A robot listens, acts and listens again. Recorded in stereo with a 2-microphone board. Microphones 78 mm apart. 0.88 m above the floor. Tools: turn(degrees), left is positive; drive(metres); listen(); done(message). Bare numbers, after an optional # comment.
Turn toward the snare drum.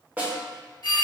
# The snare drum: about 20° right or 160° right.
turn(-20)
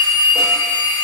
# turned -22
listen()
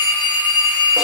listen()
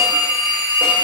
done("I heard a snare drum, but can't make it out now. It was about 5° left or 140° right.")